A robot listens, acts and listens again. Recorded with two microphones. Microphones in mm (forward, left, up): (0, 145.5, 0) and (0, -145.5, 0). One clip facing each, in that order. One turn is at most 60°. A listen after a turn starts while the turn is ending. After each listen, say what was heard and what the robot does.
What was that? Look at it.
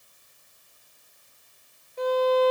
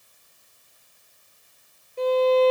The violin: about 35° right or 145° right. Turn 35° right.
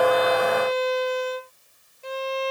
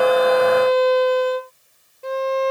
So it is at 110° right. Turn 60° right.
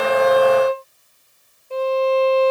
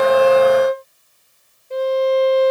The violin is now 20° right. Turn 20° right.
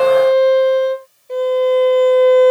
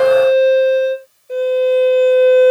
Facing the violin.